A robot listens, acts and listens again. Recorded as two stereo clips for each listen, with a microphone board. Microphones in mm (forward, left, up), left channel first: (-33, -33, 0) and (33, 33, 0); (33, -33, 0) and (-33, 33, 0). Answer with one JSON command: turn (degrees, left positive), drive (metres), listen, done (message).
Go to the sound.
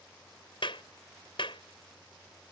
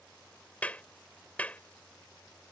{"turn": -120}
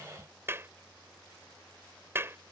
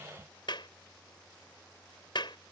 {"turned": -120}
{"turn": -15}
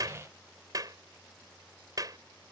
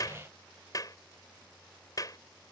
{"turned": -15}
{"drive": 1.0}
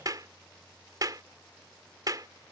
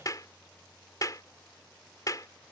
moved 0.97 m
{"drive": 1.0}
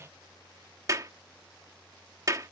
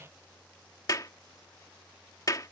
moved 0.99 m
{"drive": 1.0}
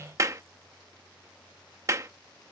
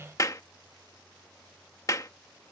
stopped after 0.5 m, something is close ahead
{"done": "Arrived at the clap, straight ahead."}